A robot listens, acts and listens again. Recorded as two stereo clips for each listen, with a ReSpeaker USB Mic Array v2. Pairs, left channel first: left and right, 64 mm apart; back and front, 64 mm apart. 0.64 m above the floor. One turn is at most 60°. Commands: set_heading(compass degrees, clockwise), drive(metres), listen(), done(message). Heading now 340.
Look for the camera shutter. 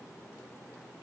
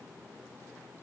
listen()
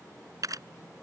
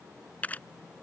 set_heading(40)
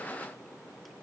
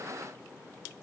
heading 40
set_heading(95)
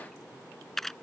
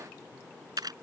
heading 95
done("Found it: a camera shutter, straight ahead.")